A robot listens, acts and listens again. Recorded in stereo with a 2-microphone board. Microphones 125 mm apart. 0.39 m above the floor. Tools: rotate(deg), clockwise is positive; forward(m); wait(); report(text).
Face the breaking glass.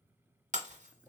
rotate(75)
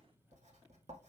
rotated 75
wait()
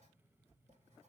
report("I heard breaking glass, but can't make it out now. It was about straight ahead or 30° right.")